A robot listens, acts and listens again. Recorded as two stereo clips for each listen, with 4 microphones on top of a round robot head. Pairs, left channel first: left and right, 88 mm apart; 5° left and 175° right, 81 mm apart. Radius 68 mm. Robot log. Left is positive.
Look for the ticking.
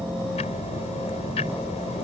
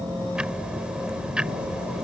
note: The ticking: 110° left.
cmd yaw +110
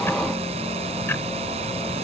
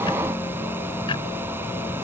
cmd idle
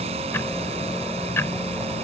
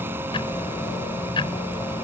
note: The ticking is now 25° left.
cmd yaw +25
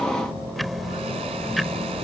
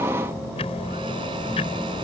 end: Found it: ticking, straight ahead.